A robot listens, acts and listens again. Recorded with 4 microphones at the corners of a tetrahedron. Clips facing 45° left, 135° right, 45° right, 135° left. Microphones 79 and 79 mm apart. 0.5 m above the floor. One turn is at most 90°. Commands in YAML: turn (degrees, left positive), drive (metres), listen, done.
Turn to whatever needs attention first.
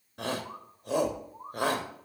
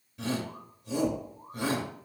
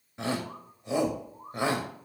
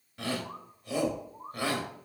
turn: 25
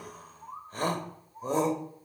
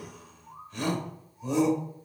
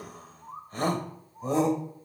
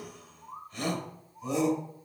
done: "Found it: a shout, straight ahead, 1 to 2 m away."